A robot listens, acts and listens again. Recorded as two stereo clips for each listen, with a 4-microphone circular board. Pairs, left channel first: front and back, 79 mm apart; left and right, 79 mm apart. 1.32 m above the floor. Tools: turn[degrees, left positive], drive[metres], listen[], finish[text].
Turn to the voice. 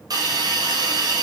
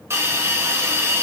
Action: listen[]
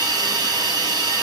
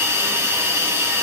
Action: listen[]
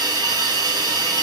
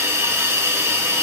Action: finish[I can't make out anyone speaking, only a hiss.]